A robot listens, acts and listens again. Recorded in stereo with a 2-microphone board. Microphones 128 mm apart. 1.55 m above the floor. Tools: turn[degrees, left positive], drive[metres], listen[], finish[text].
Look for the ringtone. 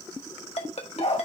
Thought: The ringtone: about 55° left or 125° left.
Action: turn[55]
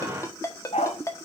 Thought: So it is at 30° left.
Action: turn[30]
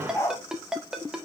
Action: finish[Found it: a ringtone, straight ahead, 1 to 2 m away.]